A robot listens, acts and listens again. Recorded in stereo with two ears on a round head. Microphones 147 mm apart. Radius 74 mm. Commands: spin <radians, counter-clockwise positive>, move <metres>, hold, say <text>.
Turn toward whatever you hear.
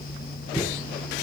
spin 0.44
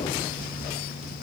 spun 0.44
hold
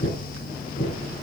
spin 2.18
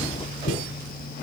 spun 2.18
spin 1.05
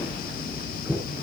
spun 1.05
spin -0.17
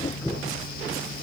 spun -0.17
say Facing the knocking.